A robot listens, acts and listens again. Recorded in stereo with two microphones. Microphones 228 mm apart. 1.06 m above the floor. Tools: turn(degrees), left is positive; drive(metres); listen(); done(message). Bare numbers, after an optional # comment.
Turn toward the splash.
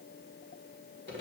listen()
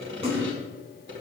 # The splash: about 25° right or 155° right.
turn(-25)
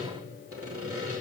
listen()
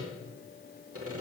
done("I heard a splash, but can't make it out now. It was about straight ahead or 130° right.")